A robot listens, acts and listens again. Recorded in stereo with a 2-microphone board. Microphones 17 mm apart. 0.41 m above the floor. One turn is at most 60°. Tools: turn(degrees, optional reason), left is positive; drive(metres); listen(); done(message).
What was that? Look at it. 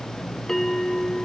turn(degrees=25, reason="The bell: about 25° left or 155° left.")
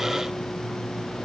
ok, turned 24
listen()
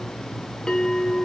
turn(degrees=60, reason="So it is at 130° left.")
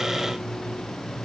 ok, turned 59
turn(degrees=60, reason="Nothing new. It was at 70° left.")
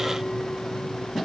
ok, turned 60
turn(degrees=10, reason="Nothing new. It was at 10° left.")
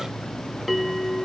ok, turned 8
done("Facing the bell, 1 to 2 m away.")